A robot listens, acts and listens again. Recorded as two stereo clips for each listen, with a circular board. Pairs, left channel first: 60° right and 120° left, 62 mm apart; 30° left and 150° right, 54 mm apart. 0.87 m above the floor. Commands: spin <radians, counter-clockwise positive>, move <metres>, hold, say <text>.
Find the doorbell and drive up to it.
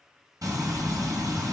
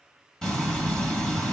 hold
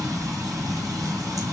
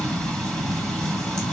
hold
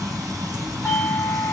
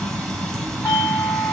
move 1.0
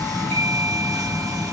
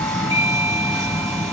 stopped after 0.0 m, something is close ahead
say Blocked. The doorbell is further on, straight ahead.